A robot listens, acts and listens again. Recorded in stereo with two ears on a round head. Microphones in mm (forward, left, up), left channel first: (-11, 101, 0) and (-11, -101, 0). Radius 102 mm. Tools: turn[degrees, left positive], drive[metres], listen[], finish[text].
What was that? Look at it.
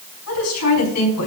Action: turn[90]
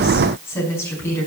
Thought: So it is at 10° left.
Action: turn[10]
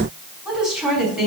Action: finish[Facing the woman speaking, over 4 m away.]